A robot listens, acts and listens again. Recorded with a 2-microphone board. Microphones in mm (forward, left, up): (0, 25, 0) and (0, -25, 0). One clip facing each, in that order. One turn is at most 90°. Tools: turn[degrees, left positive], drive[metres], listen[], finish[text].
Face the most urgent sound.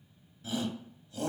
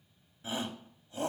Thought: The shout: about 30° right or 150° right.
Action: turn[-30]
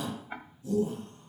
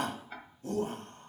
Thought: So it is at 115° right.
Action: turn[-90]
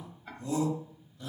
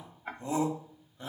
Thought: The shout is now 40° right.
Action: turn[-40]
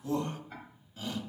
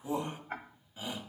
Thought: The shout is now 20° right.
Action: turn[-20]
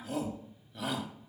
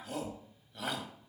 Action: finish[Facing the shout.]